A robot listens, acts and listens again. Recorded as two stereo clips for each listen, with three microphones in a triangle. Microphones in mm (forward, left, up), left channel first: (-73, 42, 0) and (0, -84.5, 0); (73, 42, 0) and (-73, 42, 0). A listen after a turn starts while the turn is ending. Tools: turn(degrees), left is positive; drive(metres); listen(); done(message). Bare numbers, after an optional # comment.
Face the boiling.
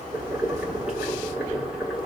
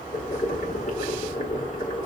# The boiling: 25° left.
turn(25)
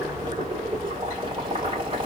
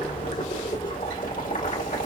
# The boiling is now 10° right.
turn(-10)
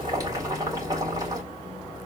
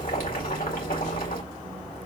done("Facing the boiling.")